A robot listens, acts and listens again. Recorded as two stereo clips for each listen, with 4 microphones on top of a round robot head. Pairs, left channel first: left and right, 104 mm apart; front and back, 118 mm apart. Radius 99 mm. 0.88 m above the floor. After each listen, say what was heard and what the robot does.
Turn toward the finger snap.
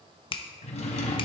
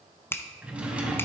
The finger snap: 70° left. Turn 70° left.
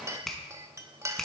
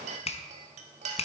Facing the finger snap, 1 to 2 m away.